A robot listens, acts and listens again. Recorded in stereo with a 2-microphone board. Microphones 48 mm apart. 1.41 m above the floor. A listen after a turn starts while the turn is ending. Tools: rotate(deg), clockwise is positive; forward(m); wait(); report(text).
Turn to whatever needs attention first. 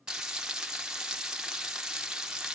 wait()
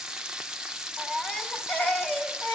rotate(-20)
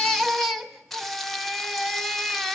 report("Facing the baby crying.")